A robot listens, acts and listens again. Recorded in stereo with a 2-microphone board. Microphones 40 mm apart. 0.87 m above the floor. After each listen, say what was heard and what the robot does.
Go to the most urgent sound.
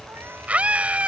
The scream: about 35° right or 145° right. Turn 35° right.
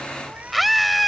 Drive 1.0 m forward.
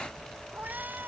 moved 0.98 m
Keep listening.
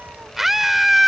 Drive 1.0 m forward.
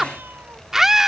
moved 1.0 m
The scream is now 10° right. Turn 10° right.
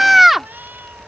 Drive 1.0 m forward.
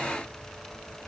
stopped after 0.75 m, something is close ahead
Keep listening.
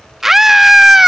Arrived at the scream, straight ahead.